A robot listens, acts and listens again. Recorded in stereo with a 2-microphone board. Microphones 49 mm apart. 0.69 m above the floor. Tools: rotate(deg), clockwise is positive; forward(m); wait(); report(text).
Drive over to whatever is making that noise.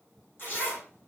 rotate(-45)
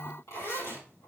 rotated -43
rotate(-90)
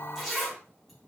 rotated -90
forward(1.0)
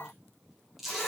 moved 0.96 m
forward(1.0)
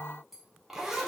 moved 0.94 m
rotate(10)
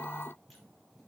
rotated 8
wait()
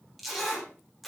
forward(1.0)
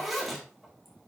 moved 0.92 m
forward(1.0)
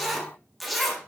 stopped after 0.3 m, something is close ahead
report("I am next to the zipper.")